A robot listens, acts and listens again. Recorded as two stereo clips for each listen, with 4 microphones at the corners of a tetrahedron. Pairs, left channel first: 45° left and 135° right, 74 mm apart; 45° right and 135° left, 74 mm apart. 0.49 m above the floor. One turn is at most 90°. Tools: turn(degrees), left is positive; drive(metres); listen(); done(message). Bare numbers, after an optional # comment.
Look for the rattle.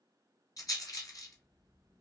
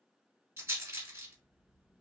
# The rattle: 80° left.
turn(80)
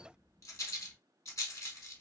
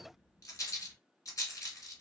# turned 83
done("Found it: a rattle, straight ahead.")